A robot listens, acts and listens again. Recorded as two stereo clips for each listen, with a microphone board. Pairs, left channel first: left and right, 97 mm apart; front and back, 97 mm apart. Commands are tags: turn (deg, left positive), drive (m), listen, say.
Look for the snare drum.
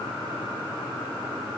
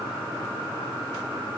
<listen/>
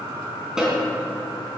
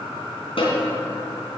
<say>Facing the snare drum, over 4 m away.</say>